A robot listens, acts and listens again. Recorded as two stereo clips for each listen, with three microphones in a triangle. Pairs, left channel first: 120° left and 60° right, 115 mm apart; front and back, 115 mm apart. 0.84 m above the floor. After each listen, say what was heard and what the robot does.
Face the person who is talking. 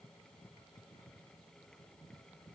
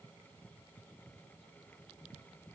Keep listening.
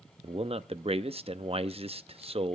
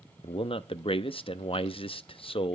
The man speaking: 35° right. Turn 35° right.
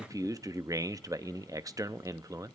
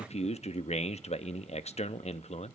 Facing the man speaking.